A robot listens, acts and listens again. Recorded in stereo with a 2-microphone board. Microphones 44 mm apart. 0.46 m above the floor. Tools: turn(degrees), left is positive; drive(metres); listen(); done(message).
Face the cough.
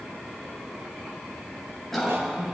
turn(degrees=30)
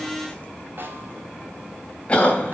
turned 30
turn(degrees=150)
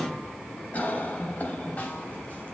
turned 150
turn(degrees=40)
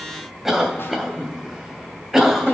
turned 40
turn(degrees=-10)
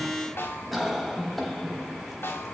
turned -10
done("Found it: a cough, straight ahead, 2 to 4 m away.")